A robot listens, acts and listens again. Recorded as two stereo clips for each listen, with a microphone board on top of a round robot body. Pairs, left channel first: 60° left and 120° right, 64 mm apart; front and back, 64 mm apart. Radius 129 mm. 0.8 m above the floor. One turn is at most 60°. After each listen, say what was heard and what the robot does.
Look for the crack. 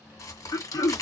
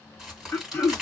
The crack: 95° left. Turn 60° left.
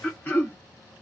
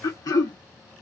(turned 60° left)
Nothing new. It was at 35° left. Turn 35° left.
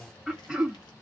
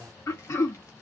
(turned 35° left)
I heard a crack from this way, but can't make it out now.